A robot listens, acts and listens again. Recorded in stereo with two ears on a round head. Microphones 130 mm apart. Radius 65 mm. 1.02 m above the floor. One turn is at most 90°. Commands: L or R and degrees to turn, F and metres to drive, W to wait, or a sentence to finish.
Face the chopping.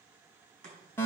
R60
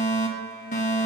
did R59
W
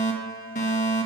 W
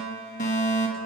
I heard chopping, but can't make it out now. It was about straight ahead or 60° right.